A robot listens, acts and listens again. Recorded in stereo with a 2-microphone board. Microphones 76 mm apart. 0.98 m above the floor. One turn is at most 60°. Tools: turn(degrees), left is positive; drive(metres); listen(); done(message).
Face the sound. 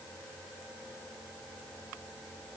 listen()
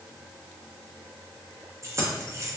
turn(degrees=-35)
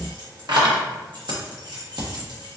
turn(degrees=-60)
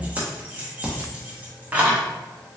turn(degrees=-20)
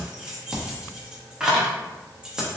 turn(degrees=-10)
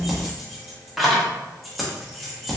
done("Facing the keys jangling, under 1 m away.")